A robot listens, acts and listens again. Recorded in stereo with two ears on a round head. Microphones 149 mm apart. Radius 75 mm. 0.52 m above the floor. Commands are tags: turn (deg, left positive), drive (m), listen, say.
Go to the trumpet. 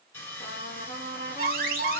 <turn deg="60"/>
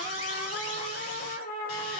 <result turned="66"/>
<turn deg="55"/>
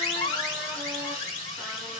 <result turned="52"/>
<listen/>
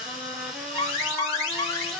<listen/>
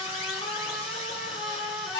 <drive m="1.0"/>
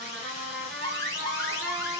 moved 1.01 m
<drive m="1.0"/>
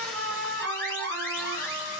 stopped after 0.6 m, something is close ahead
<say>Arrived at the trumpet, straight ahead.</say>